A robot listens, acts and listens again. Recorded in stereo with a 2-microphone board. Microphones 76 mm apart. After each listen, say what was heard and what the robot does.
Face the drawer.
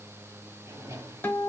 The drawer: about 40° right or 140° right. Turn 40° right.
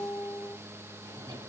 So it is at 100° right. Turn 100° right.
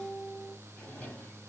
The drawer is now 15° left. Turn 15° left.
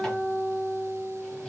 Keep listening.
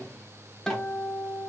Keep listening.
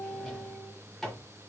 Facing the drawer, under 1 m away.